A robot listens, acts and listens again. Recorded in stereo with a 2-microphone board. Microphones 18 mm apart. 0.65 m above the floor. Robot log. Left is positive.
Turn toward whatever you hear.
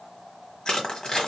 note: The crushing: about 45° left or 135° left.
cmd yaw +45
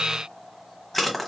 end: Facing the crushing, 1 to 2 m away.